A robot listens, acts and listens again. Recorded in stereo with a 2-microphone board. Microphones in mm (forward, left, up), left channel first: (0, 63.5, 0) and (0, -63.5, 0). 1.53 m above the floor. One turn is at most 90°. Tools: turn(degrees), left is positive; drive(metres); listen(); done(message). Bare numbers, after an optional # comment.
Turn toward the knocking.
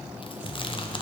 listen()
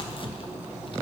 listen()
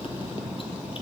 done("I can't make out knocking to turn to.")